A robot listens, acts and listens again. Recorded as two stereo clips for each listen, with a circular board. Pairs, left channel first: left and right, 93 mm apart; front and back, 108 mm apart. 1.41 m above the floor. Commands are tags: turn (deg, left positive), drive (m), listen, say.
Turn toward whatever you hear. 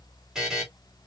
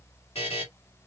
<say>Facing the buzzer, 2 to 4 m away.</say>